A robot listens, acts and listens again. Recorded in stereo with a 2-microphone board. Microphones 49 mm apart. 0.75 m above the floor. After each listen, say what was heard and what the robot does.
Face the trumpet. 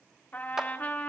The trumpet: about 35° left or 145° left. Turn 35° left.
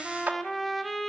Found it: a trumpet, straight ahead, 1 to 2 m away.